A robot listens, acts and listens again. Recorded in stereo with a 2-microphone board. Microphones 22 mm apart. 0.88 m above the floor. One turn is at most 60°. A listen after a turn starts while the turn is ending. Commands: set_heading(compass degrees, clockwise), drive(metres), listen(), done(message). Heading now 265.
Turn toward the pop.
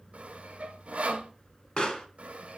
set_heading(220)
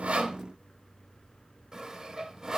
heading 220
listen()
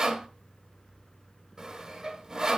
done("I heard a pop, but can't make it out now. It was about straight ahead or 90° left.")